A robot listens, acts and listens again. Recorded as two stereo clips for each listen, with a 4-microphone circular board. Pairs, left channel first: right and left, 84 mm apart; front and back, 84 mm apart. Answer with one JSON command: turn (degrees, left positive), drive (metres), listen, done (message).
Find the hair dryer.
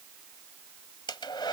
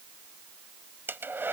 {"turn": -115}
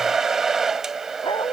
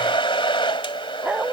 {"done": "Found it: a hair dryer, straight ahead."}